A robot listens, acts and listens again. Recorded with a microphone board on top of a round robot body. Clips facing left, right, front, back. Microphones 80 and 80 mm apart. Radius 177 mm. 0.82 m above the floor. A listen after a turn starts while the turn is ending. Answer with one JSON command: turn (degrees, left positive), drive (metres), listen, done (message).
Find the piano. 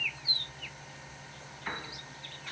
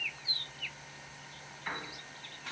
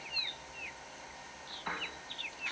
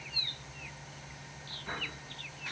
{"done": "Found it: a piano, straight ahead."}